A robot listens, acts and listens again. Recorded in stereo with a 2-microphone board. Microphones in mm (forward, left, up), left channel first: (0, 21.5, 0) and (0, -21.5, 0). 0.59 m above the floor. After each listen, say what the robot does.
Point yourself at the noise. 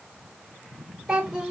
Turn 30° right.
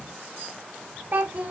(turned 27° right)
Turn 140° right.
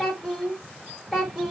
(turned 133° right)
Turn 10° right.
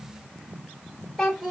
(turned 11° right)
Facing the child speaking, 1 to 2 m away.